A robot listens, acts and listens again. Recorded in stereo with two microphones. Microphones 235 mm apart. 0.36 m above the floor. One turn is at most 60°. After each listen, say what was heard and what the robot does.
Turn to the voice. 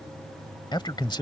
The man speaking: about 20° left or 160° left. Turn 20° left.
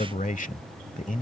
So it is at 135° left. Turn 60° left.
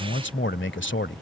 The man speaking is now 95° left. Turn 60° left.
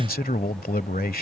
The man speaking is now 50° left. Turn 50° left.
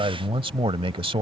The man speaking is now 30° right. Turn 30° right.
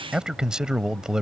Facing the man speaking.